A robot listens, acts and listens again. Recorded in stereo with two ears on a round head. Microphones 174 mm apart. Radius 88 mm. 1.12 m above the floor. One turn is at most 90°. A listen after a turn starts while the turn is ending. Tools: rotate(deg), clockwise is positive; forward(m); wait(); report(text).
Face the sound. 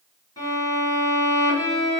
rotate(-20)
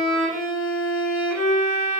report("Found it: a violin, straight ahead.")